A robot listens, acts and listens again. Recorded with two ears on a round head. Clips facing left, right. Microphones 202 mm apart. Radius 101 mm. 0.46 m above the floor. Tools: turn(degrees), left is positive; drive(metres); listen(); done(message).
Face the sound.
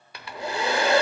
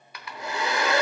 turn(degrees=30)
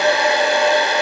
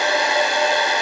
turn(degrees=120)
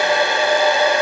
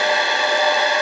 turn(degrees=50)
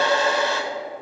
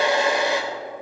turn(degrees=-15)
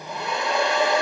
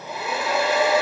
done("Facing the hair dryer.")